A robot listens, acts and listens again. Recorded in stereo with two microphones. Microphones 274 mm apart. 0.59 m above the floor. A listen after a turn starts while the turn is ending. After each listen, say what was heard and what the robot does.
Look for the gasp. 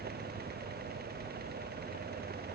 Keep listening.
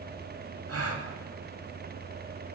The gasp: about 60° right or 120° right. Turn 60° right.
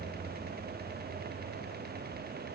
Keep listening.
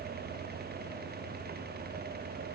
I heard a gasp, but can't make it out now. It was about straight ahead or 60° right.